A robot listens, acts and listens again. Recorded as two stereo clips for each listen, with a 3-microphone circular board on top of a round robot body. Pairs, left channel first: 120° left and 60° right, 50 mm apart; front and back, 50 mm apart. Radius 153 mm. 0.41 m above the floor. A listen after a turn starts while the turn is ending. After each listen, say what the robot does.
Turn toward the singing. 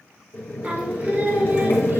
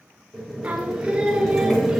Turn 105° right.
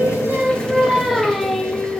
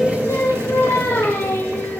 Turn 50° left.
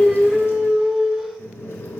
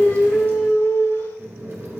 Turn 25° left.
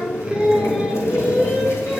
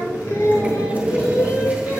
Turn 15° left.
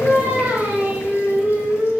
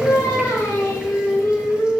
Found it: singing, straight ahead, 1 to 2 m away.